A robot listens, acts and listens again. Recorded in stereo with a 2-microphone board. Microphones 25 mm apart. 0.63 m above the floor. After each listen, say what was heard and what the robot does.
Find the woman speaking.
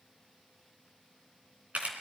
Keep listening.
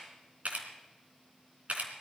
Keep listening.
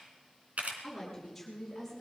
Turn 30° right.
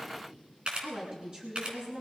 So it is at 140° right. Turn 140° right.
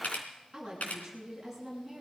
Found it: a woman speaking, straight ahead, over 4 m away.